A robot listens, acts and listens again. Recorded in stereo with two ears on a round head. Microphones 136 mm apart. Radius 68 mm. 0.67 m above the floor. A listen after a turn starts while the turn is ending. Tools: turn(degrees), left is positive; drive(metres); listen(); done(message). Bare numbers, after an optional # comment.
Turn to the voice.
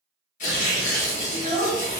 # The child speaking: about 30° left or 150° left.
turn(30)
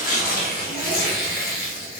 listen()
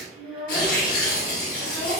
done("Facing the child speaking.")